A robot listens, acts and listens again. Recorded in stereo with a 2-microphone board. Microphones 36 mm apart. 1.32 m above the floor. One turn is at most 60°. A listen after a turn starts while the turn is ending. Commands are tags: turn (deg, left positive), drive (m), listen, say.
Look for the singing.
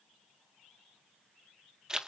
<listen/>
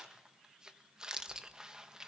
<listen/>
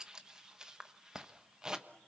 <say>I can't make out singing to turn to.</say>